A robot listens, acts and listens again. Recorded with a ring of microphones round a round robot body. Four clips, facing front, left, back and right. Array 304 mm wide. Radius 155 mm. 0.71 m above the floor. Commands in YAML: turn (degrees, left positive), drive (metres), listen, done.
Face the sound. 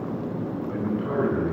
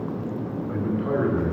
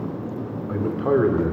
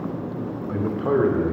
turn: -150
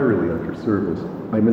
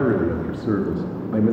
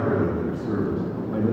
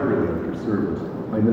done: "Facing the man speaking."